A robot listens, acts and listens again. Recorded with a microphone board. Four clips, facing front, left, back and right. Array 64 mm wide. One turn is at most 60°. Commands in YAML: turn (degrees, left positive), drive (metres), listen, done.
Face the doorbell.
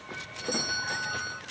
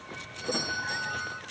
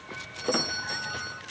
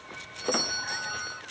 turn: -40
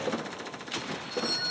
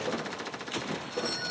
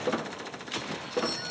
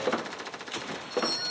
turn: -15
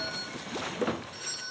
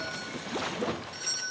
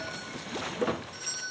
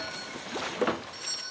done: "Found it: a doorbell, straight ahead."